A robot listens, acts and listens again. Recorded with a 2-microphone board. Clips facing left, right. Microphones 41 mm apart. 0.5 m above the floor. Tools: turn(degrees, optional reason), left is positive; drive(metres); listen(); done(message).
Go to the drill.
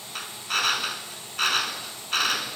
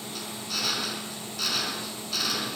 turn(degrees=50, reason="The drill: about 50° left or 130° left.")
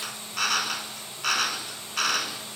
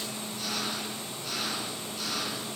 turn(degrees=80, reason="So it is at 80° left.")
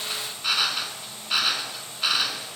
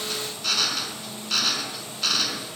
turn(degrees=15, reason="The drill is now 15° left.")
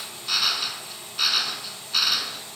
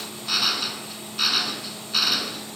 drive(metres=1.0)
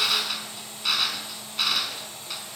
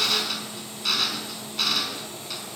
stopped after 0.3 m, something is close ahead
turn(degrees=10, reason="The drill is now 10° left.")
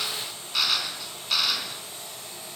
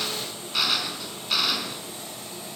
done("Something is in my way. I am facing the drill but have not reached it.")